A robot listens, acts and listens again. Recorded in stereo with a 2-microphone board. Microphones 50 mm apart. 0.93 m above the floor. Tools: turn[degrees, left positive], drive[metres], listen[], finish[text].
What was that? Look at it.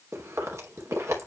Action: turn[-90]
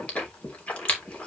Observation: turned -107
Thought: So it is at 25° left.
Action: turn[25]
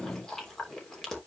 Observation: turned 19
Thought: The chewing is now 10° left.
Action: turn[10]
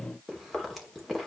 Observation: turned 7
Action: finish[Facing the chewing.]